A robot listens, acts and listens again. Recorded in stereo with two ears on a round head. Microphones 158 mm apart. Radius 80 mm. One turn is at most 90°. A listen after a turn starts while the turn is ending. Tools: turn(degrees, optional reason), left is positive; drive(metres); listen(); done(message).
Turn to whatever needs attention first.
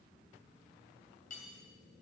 listen()
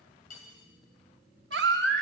turn(degrees=-65, reason="The baby crying: about 65° right or 115° right.")
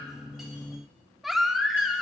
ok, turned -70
done("Found it: a baby crying, straight ahead, under 1 m away.")